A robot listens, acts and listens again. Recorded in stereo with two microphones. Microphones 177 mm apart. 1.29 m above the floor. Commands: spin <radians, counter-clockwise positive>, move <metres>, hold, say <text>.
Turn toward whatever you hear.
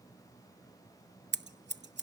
spin -1.57
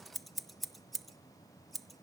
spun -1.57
say Found it: scissors, straight ahead, under 1 m away.